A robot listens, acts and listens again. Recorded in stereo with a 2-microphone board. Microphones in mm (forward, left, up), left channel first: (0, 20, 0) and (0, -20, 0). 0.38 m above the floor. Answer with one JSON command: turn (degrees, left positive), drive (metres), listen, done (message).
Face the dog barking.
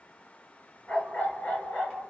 {"turn": 40}
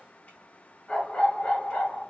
{"turn": 45}
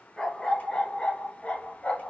{"turn": 30}
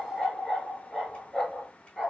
{"done": "Facing the dog barking, 1 to 2 m away."}